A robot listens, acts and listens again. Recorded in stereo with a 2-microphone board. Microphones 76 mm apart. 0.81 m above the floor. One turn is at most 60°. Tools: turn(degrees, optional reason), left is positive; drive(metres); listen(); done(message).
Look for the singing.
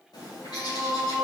turn(degrees=30)
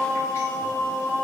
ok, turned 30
turn(degrees=60, reason="So it is at 145° left.")
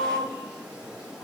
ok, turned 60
turn(degrees=60, reason="The singing is now 95° left.")
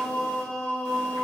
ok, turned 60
turn(degrees=15, reason="The singing is now 15° left.")
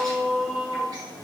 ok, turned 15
done("Found it: singing, straight ahead, 1 to 2 m away.")